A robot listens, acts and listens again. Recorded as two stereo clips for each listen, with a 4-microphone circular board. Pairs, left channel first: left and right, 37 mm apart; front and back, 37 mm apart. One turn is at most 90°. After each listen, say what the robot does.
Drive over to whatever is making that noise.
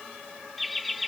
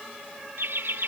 Turn 90° left.
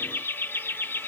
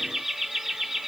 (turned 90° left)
Turn 90° left.
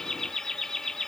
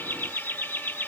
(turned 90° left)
Turn 15° left.
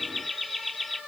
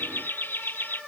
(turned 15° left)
Drive 1.0 m forward.
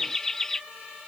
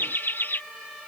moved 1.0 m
Turn 10° left.
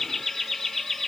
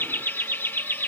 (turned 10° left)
Drive 1.0 m forward.
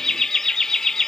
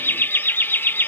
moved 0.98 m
Turn 15° left.
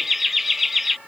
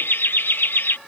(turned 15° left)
Drive 1.0 m forward.
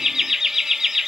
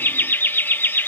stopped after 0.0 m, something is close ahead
Turn 10° right.
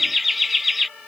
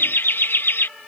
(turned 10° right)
Arrived at the laughter, straight ahead.